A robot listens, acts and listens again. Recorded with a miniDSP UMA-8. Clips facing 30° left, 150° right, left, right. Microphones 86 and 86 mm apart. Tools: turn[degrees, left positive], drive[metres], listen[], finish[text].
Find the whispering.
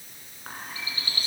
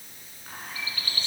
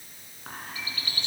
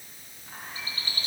Thought: The whispering: 70° left.
Action: turn[70]
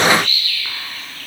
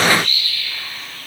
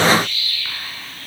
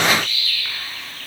Action: listen[]
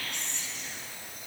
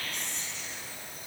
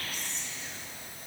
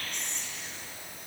Thought: The whispering is now 10° left.
Action: turn[10]
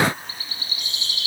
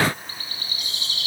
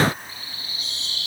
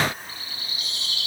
Action: finish[Found it: whispering, straight ahead.]